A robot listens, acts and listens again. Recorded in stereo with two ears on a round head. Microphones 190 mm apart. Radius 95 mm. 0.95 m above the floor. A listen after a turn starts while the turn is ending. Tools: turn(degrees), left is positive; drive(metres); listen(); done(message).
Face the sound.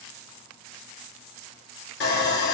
turn(degrees=50)
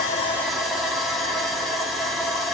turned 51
done("Facing the sawing.")